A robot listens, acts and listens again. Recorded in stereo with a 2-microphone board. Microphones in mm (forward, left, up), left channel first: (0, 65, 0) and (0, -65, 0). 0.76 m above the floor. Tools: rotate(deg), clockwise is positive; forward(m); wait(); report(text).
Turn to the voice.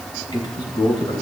rotate(-40)
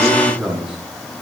report("Facing the man speaking.")